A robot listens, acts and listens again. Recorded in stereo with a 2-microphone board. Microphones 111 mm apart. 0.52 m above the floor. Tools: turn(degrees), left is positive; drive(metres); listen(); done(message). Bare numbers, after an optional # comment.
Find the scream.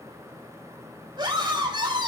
# The scream: about 45° right or 135° right.
turn(-45)
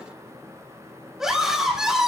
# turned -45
done("Found it: a scream, straight ahead.")